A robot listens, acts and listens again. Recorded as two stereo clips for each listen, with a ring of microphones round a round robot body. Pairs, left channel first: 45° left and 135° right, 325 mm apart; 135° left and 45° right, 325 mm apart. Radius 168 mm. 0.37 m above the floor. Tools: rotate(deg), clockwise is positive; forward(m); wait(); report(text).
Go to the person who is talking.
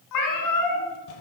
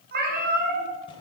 wait()
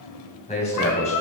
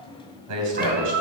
rotate(25)
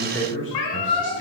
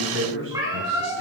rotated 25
forward(1.0)
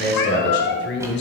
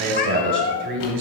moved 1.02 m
forward(1.0)
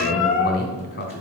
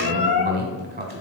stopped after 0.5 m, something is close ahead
report("Arrived at the man speaking, straight ahead.")